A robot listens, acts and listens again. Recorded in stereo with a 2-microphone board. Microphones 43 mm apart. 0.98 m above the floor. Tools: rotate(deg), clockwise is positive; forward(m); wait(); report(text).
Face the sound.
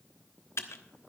rotate(-90)
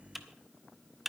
report("Found it: typing on a keyboard, straight ahead.")